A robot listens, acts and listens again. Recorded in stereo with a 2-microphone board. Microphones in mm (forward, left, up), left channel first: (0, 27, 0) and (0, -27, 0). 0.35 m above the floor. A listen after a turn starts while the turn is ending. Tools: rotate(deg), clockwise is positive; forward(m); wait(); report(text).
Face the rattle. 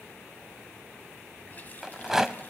rotate(30)
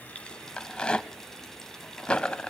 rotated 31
rotate(-20)
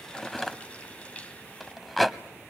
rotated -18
report("Facing the rattle.")